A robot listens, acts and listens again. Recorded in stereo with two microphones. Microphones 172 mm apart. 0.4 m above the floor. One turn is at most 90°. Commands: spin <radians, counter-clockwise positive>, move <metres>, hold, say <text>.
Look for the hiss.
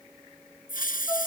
spin 1.05
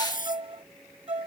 spin 1.05
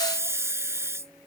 spin -0.26
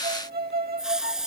say Facing the hiss.